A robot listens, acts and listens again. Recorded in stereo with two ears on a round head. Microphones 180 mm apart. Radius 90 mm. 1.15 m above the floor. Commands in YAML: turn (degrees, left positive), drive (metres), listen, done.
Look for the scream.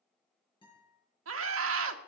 turn: -90
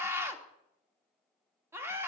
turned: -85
turn: -15
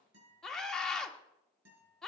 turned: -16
done: "Facing the scream, 1 to 2 m away."